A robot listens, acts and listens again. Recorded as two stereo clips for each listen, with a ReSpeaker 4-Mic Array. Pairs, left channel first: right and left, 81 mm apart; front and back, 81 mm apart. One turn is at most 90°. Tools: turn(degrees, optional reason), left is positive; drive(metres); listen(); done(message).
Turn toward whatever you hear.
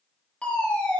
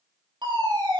turn(degrees=-90, reason="The fire alarm: 170° right.")
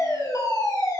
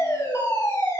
turn(degrees=-50, reason="The fire alarm is now 50° right.")
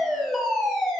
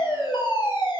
done("Facing the fire alarm.")